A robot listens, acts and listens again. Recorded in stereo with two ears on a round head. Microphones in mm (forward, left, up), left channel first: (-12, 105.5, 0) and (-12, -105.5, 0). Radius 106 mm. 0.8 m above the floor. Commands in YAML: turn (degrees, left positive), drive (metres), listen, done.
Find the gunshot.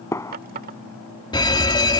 turn: 30
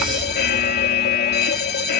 listen: true
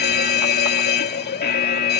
done: "I heard a gunshot, but can't make it out now. It was about 15° right or 135° left."